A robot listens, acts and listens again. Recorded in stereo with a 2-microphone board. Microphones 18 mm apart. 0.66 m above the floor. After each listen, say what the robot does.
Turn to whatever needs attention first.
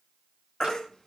Turn 30° left.
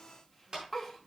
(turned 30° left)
Found it: a baby crying, straight ahead.